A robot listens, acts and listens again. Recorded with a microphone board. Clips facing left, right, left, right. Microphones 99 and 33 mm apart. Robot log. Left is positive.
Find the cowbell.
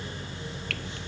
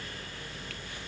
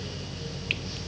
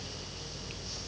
cmd idle
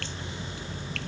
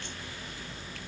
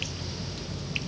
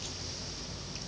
cmd idle
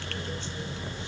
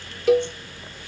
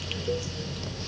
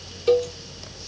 cmd yaw -90
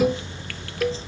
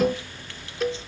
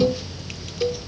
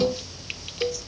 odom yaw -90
end: Facing the cowbell.